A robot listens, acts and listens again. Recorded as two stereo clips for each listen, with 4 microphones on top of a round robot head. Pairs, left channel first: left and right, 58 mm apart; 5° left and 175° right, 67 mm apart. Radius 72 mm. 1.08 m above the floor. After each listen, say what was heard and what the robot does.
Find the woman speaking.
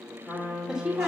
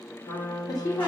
The woman speaking: 15° right. Turn 15° right.
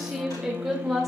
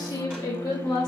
Found it: a woman speaking, straight ahead.